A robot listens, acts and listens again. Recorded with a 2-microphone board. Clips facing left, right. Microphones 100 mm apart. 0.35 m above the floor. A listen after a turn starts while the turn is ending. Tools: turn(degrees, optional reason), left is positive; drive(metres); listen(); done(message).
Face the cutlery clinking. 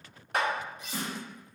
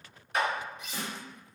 turn(degrees=40, reason="The cutlery clinking: about 40° left or 140° left.")
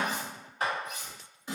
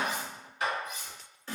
turn(degrees=90, reason="So it is at 90° left.")
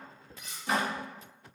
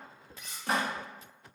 done("Facing the cutlery clinking.")